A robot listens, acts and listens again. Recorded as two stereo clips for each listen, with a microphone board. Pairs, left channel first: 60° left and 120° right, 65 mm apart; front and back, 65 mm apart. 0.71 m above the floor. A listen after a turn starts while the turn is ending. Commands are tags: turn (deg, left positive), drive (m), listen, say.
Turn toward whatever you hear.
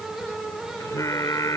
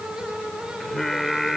<turn deg="85"/>
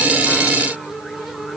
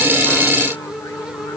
<listen/>
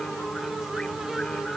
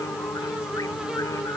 <listen/>
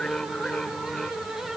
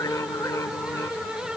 <turn deg="-15"/>
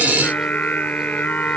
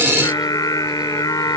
<say>Facing the singing.</say>